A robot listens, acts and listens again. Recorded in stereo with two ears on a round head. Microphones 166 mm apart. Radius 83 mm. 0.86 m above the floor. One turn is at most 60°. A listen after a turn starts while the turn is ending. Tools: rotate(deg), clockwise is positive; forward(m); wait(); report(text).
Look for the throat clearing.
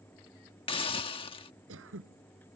rotate(60)
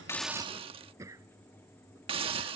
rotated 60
rotate(15)
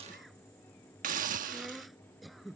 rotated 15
report("Found it: throat clearing, straight ahead.")